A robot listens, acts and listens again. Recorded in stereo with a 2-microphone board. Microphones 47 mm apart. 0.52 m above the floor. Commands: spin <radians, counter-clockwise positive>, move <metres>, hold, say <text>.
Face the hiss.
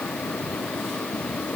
hold
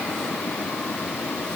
hold
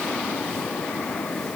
say I can't make out a hiss to turn to.